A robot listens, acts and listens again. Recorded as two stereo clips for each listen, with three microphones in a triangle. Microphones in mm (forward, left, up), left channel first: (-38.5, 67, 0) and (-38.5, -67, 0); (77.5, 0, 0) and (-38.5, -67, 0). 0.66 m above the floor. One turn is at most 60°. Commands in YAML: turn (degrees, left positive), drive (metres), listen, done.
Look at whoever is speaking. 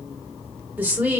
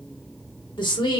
turn: -15
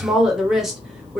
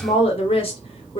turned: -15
done: "Found it: a woman speaking, straight ahead, 1 to 2 m away."